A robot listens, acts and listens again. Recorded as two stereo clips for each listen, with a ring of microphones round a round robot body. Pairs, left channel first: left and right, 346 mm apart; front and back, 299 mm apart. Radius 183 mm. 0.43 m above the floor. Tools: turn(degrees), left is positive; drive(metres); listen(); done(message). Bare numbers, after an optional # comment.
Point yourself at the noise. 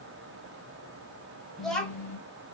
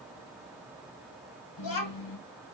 # The child speaking: 10° left.
turn(10)
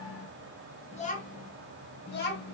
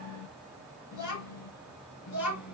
# The child speaking is now 30° left.
turn(30)
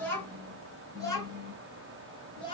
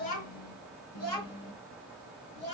# The child speaking is now 15° left.
turn(15)
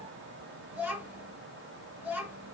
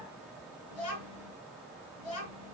done("Facing the child speaking, 2 to 4 m away.")